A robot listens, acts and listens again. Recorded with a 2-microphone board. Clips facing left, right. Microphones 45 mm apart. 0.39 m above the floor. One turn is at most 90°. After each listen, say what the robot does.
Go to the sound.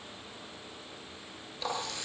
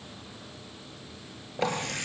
Turn 55° right.
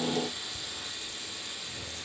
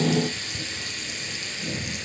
Turn 70° right.
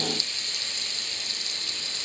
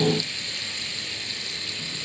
Turn 15° right.
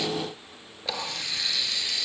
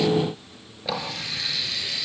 Drive 1.0 m forward.
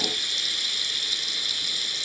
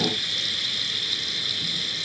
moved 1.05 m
Drive 1.0 m forward.
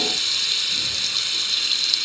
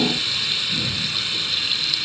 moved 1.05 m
Turn 10° right.
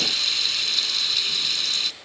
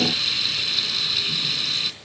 Drive 1.0 m forward.
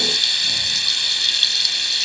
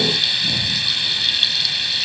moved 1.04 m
Turn 10° right.
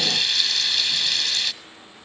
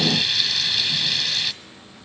Drive 1.0 m forward.
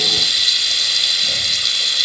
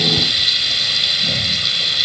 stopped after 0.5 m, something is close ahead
Arrived at the running tap, straight ahead.